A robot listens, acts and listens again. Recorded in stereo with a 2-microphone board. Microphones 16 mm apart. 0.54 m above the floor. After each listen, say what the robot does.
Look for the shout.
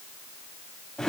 Keep listening.
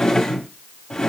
Keep listening.
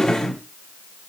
I can't make out a shout to turn to.